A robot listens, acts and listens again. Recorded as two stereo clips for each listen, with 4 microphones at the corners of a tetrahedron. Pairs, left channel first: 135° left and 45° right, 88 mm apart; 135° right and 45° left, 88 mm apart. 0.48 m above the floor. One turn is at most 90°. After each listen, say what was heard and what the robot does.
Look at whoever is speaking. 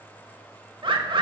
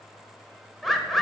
Keep listening.
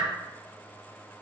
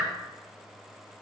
Keep listening.
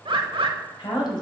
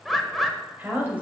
The woman speaking: 115° left. Turn 90° left.
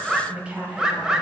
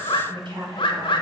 The woman speaking is now 30° left. Turn 30° left.
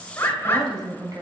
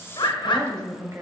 Facing the woman speaking, 2 to 4 m away.